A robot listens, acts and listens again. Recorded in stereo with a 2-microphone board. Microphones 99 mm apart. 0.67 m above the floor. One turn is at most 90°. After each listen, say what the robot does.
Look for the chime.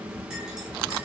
Keep listening.
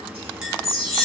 Turn 90° left.
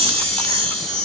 Turn 15° left.
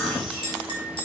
Keep listening.
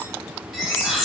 Found it: a chime, straight ahead.